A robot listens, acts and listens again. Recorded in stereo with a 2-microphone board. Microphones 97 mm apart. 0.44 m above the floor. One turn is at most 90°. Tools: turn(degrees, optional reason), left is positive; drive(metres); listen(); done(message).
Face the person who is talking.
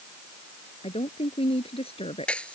turn(degrees=90)
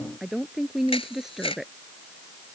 done("Found it: a woman speaking, straight ahead.")